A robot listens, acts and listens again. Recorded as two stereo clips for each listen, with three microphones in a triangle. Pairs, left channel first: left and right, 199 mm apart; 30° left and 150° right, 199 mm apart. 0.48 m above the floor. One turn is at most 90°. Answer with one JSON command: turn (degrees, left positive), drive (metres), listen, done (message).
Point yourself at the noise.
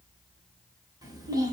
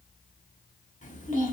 {"turn": -20}
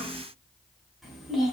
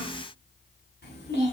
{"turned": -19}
{"done": "Found it: a child speaking, straight ahead, 1 to 2 m away."}